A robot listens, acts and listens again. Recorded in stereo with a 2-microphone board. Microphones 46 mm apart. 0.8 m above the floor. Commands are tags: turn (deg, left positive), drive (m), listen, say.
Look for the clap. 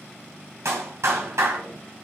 <turn deg="-90"/>
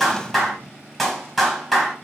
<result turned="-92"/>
<say>Found it: a clap, straight ahead, over 4 m away.</say>